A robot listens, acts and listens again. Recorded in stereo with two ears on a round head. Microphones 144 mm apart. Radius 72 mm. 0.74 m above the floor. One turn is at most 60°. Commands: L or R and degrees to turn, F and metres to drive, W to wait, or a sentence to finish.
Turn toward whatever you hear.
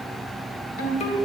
L50
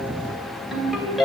Found it: a ringtone, straight ahead.